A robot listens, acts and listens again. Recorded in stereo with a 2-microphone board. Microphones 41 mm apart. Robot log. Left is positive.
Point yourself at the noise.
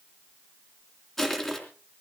cmd yaw +30
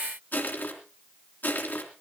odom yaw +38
note: So it is at 135° left.
cmd yaw +135
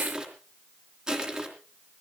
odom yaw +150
note: The crushing is now 15° right.
cmd yaw -15
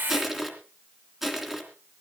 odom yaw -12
end: Found it: crushing, straight ahead.